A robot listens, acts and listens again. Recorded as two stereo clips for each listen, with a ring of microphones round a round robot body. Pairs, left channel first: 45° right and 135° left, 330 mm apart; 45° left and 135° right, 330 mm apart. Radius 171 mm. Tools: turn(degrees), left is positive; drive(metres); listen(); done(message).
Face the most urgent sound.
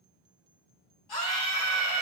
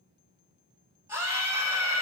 turn(degrees=-55)
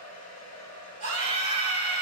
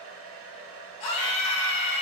turn(degrees=25)
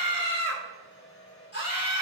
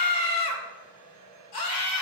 turn(degrees=15)
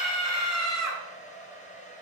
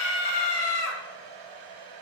done("Facing the scream, 2 to 4 m away.")